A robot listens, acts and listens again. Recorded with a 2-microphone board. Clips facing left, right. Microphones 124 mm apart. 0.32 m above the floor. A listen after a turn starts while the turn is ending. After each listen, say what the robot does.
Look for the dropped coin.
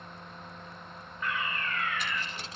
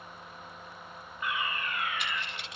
Turn 40° left.
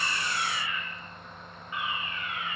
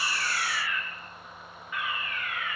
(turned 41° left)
Keep listening.
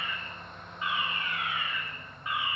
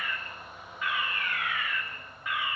I heard a dropped coin, but can't make it out now. It was about 5° right or 100° left.